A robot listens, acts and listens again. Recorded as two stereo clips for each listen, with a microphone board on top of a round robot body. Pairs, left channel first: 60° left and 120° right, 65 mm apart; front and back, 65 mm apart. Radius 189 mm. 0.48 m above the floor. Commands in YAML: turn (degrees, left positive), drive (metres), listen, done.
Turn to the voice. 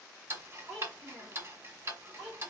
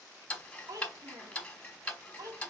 turn: 155
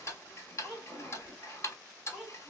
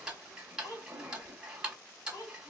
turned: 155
turn: -35
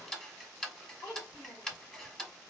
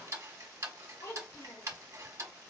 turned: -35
done: "Found it: a child speaking, straight ahead."